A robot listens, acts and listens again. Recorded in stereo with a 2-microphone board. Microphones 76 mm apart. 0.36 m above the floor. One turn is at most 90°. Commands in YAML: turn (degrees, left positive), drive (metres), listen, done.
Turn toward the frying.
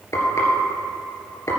turn: 40
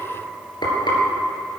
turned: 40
turn: 90
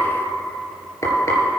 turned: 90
turn: 45
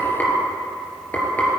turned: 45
turn: 20
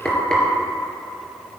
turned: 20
turn: 10
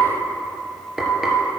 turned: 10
done: "Found it: frying, straight ahead, 2 to 4 m away."